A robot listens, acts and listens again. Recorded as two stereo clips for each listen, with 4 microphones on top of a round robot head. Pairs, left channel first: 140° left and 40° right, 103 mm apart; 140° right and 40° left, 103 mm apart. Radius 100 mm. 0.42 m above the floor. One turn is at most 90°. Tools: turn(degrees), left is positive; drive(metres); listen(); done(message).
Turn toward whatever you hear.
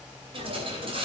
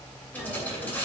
turn(degrees=-65)
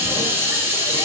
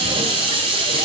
turn(degrees=25)
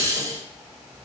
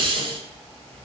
turn(degrees=10)
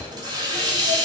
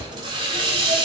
done("Found it: a hiss, straight ahead, 2 to 4 m away.")